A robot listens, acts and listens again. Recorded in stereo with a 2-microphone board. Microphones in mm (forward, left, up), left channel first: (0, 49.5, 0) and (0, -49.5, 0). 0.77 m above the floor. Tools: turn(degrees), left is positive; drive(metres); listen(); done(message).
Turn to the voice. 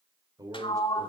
turn(degrees=-40)
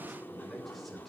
done("Found it: a man speaking, straight ahead.")